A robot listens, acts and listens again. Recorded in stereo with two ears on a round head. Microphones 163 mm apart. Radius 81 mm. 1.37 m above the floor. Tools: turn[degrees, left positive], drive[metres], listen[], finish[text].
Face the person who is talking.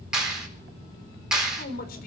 Thought: The man speaking: about 55° left or 125° left.
Action: turn[55]
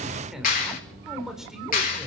Action: finish[Found it: a man speaking, straight ahead.]